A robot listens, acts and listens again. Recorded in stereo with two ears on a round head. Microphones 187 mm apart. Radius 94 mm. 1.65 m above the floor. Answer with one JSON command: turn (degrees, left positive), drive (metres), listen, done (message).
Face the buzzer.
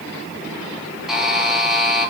{"turn": 30}
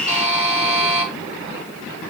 {"turn": -35}
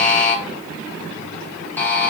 {"turn": 10}
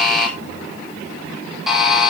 {"done": "Found it: a buzzer, straight ahead, 1 to 2 m away."}